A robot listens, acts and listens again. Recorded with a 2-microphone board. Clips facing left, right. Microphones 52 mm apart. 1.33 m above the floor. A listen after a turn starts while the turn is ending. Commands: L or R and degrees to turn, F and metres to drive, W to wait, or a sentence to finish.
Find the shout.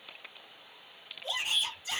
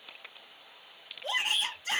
R65
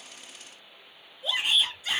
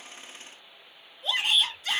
Found it: a shout, straight ahead.